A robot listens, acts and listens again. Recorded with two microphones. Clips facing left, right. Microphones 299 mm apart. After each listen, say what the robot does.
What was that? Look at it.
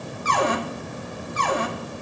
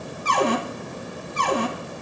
Turn 40° right.
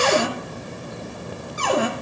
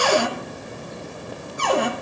Found it: a cupboard door, straight ahead.